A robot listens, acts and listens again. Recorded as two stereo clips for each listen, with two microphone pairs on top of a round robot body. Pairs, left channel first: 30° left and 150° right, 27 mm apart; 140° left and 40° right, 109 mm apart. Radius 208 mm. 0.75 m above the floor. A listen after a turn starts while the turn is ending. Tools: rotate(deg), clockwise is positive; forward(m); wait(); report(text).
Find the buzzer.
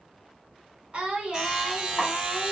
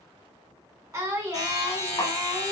rotate(-135)
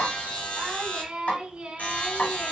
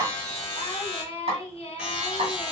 rotate(-40)
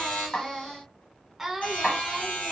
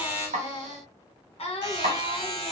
report("Facing the buzzer.")